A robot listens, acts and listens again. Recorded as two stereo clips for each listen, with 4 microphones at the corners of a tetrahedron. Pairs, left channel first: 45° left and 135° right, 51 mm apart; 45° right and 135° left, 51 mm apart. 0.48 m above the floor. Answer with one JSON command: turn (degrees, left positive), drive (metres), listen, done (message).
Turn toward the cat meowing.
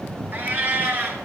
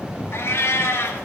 {"turn": -85}
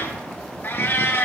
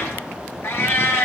{"done": "Found it: a cat meowing, straight ahead, 1 to 2 m away."}